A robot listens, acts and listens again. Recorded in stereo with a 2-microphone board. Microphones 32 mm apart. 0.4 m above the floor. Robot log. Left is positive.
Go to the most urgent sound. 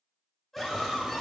cmd yaw +30
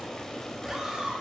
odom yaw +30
note: So it is at 20° right.
cmd yaw -20
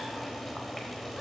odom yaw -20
cmd idle
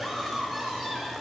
cmd fwd 1.0
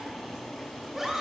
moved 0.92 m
note: The scream is now 10° right.
cmd yaw -10
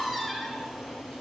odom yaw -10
cmd fwd 1.0
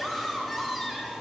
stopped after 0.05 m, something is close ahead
end: I am next to the scream.